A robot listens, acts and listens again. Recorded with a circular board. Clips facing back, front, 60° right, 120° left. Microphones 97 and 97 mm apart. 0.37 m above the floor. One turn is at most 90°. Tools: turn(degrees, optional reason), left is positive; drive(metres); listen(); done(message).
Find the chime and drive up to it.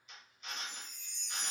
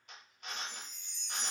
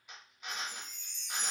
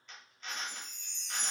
turn(degrees=55, reason="The chime: 55° left.")
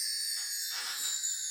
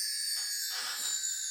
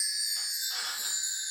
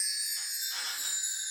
turn(degrees=10, reason="The chime is now 10° left.")
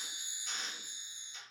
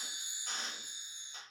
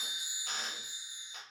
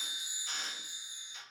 drive(metres=1.0)
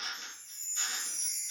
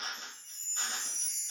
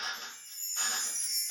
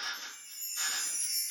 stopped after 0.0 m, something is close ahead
done("Blocked. The chime is further on, straight ahead.")